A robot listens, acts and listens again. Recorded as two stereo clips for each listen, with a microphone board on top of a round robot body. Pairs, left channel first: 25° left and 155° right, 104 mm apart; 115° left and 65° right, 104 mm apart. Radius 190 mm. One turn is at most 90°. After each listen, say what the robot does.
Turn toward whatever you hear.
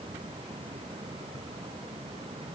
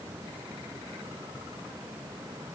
Keep listening.
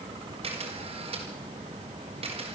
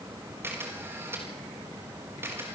Turn 90° right.
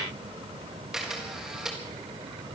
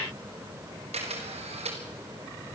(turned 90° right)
Turn 70° right.
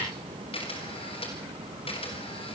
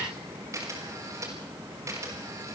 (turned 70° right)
Facing the camera shutter.